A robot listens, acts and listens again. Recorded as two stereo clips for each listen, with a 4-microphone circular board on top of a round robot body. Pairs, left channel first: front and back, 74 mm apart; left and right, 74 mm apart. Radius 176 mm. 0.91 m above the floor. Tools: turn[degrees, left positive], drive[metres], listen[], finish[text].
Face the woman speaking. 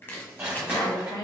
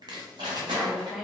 Action: finish[Found it: a woman speaking, straight ahead, 1 to 2 m away.]